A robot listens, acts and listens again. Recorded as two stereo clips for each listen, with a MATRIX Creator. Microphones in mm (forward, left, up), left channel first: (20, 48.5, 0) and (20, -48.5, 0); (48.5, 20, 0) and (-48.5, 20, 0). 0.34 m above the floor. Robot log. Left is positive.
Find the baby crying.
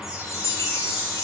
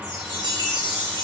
cmd idle
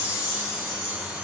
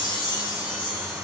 cmd idle
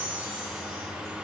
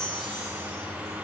end: I can't make out a baby crying, only a chime.